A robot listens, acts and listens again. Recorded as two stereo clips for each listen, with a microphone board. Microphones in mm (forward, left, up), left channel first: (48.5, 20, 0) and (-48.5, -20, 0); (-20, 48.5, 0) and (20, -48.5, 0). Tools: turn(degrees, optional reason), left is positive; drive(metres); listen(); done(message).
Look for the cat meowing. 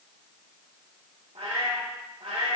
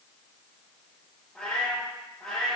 turn(degrees=-165, reason="The cat meowing: 165° right.")
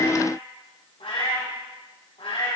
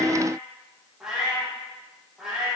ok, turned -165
turn(degrees=15, reason="The cat meowing is now 15° left.")
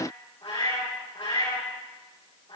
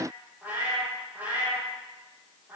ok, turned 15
done("Found it: a cat meowing, straight ahead, over 4 m away.")